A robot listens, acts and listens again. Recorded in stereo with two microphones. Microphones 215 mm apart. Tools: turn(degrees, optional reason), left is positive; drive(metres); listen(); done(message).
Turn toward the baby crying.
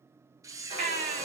turn(degrees=45, reason="The baby crying: about 45° left or 135° left.")
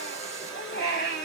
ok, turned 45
turn(degrees=80, reason="So it is at 80° left.")
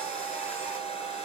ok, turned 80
listen()
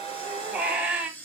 done("Found it: a baby crying, straight ahead, 1 to 2 m away.")